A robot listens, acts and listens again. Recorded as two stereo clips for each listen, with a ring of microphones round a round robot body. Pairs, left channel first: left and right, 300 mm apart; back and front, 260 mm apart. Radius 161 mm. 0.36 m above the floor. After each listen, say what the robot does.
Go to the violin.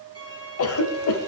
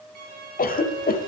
Turn 15° right.
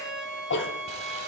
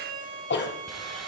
Drive 1.0 m forward.
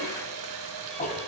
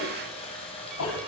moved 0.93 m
Keep listening.
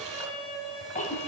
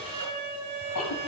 Drive 1.0 m forward.
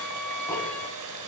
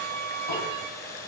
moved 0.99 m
Drive 1.0 m forward.
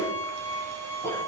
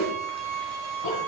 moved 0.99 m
Turn 10° left.
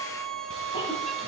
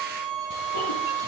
Drive 1.0 m forward.
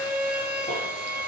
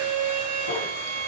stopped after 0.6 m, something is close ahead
Arrived at the violin, straight ahead.